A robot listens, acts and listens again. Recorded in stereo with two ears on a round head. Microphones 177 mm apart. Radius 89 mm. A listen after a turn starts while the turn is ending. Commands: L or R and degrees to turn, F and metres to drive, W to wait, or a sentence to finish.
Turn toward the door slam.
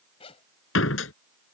L90
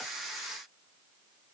Facing where the door slam came from. I can't hear it now.